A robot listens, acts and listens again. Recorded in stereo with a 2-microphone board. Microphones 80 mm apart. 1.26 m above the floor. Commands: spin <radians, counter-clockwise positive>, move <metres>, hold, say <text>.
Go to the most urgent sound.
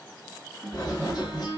hold
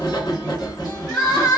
spin 0.79
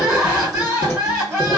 move 1.0
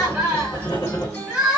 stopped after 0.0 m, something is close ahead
say Something is in my way. I am facing the crying but have not reached it.